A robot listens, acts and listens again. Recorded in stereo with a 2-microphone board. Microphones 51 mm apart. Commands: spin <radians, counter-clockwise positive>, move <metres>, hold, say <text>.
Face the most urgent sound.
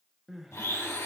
spin -0.52
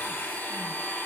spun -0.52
hold
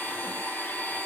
hold
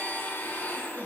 say I heard crying, but can't make it out now. It was about 25° left or 145° right.